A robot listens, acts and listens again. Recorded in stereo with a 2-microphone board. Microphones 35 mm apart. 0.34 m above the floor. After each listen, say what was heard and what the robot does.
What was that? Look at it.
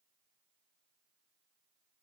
Keep listening.
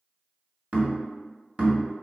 The knocking: about 40° right or 140° right. Turn 40° right.
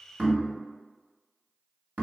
So it is at 100° right. Turn 100° right.
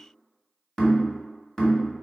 The knocking is now 15° left. Turn 15° left.
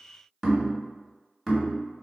Facing the knocking, 1 to 2 m away.